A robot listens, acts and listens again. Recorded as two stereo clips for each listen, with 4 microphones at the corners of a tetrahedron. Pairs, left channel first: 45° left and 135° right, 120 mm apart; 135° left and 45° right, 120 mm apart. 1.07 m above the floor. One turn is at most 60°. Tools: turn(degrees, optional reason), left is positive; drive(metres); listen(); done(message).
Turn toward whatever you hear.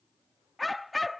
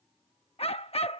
turn(degrees=60, reason="The dog barking: 135° left.")
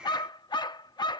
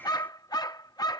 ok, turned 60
turn(degrees=60, reason="The dog barking is now 85° left.")
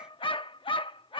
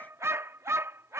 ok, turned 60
turn(degrees=20, reason="The dog barking is now 20° left.")
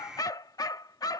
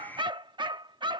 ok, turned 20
done("Facing the dog barking.")